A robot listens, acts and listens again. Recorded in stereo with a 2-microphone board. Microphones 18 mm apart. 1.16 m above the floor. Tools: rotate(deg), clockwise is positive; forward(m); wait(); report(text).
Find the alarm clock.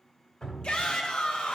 wait()
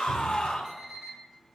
rotate(-25)
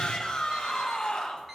wait()
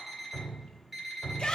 report("Facing the alarm clock.")